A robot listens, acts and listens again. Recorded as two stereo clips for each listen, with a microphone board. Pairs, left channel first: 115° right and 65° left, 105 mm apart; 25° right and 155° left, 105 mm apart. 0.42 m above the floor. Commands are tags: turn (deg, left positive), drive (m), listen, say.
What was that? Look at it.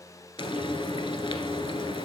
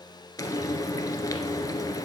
<turn deg="-75"/>
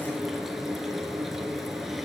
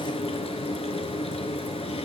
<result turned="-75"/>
<turn deg="-20"/>
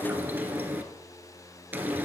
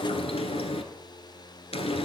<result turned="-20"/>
<say>Found it: frying, straight ahead, 1 to 2 m away.</say>